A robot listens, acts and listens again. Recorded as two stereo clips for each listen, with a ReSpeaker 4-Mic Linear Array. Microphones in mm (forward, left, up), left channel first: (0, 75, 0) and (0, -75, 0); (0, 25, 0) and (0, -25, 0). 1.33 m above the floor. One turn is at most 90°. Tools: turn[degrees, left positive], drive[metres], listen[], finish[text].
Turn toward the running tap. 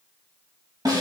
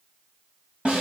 Action: listen[]
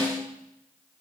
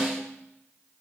Action: listen[]
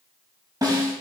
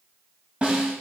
Action: finish[I can't make out a running tap, only a snare drum.]